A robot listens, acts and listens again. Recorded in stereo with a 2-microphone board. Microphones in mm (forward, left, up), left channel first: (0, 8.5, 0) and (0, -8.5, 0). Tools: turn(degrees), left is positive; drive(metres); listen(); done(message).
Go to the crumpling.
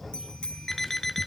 listen()
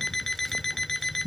listen()
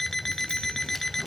done("I can't make out crumpling to turn to.")